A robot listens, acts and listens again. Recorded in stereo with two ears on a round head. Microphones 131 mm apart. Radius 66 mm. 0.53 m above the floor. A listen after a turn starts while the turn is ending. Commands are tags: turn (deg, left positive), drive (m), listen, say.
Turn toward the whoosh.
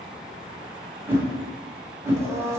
<turn deg="-15"/>
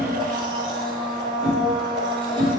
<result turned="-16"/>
<say>Found it: a whoosh, straight ahead.</say>